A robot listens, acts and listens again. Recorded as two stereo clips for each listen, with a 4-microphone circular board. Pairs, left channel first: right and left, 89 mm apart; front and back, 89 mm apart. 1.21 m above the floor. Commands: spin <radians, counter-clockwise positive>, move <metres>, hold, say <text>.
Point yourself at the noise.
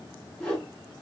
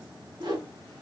spin -3.05
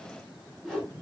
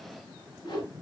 say Found it: a whoosh, straight ahead, 2 to 4 m away.